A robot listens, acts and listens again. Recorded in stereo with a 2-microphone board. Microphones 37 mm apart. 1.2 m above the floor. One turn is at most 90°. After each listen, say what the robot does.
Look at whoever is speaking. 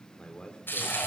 Turn 25° left.
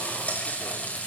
Keep listening.
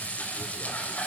Keep listening.
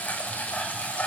I heard a man speaking, but can't make it out now. It was about straight ahead or 130° left.